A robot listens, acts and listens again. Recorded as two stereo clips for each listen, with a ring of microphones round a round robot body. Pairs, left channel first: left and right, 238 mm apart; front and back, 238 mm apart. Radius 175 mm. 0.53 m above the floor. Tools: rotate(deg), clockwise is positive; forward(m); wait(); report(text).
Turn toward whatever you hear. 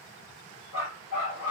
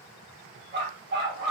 rotate(-135)
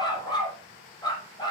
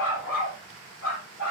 rotate(-15)
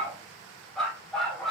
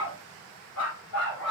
report("Facing the dog barking.")